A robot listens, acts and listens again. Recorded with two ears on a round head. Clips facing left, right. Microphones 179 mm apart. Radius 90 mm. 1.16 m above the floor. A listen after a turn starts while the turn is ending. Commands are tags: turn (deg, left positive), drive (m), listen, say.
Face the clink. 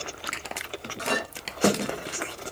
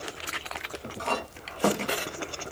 <turn deg="20"/>
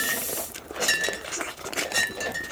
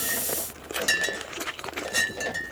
<say>Found it: a clink, straight ahead.</say>